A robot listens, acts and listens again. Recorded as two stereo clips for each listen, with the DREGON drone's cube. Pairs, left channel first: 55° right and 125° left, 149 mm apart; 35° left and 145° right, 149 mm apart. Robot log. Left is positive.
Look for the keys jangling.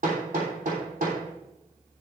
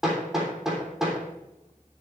cmd idle
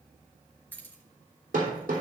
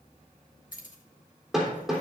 note: The keys jangling: 20° left.
cmd yaw +20
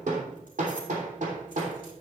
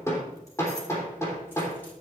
cmd idle
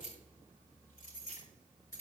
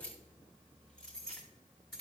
note: The keys jangling is now 50° right.
cmd yaw -50
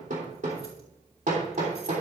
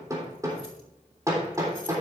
cmd idle
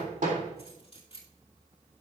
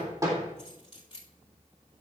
note: The keys jangling is now 10° right.
cmd yaw -10
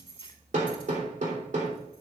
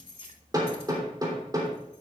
end: Facing the keys jangling, 2 to 4 m away.